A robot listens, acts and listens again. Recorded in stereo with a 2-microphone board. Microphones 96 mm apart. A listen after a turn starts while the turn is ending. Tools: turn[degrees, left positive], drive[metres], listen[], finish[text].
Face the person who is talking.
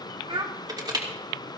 Thought: The child speaking: about 55° right or 125° right.
Action: turn[-55]
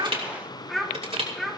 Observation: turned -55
Action: finish[Found it: a child speaking, straight ahead, 2 to 4 m away.]